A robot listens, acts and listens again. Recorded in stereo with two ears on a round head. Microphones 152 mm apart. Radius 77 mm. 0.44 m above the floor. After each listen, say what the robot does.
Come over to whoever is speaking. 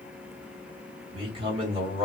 Turn 35° right.
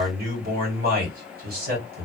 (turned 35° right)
Turn 110° right.
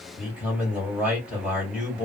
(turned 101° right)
Turn 10° right.
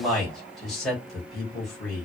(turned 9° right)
Drive 1.0 m forward.
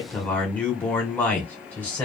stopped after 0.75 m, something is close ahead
Turn 10° left.
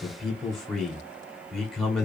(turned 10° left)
Arrived at the man speaking, straight ahead.